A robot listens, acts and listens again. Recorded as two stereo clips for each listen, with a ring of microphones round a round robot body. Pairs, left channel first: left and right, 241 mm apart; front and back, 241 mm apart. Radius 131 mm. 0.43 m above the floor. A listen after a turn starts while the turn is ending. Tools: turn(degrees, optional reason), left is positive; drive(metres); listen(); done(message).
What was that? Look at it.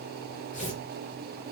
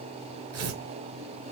turn(degrees=155, reason="The tearing paper: 155° left.")
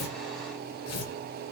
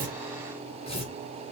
turn(degrees=65, reason="The tearing paper is now 65° left.")
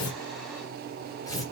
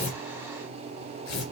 turn(degrees=15, reason="The tearing paper is now 15° left.")
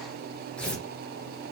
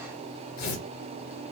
done("Found it: tearing paper, straight ahead.")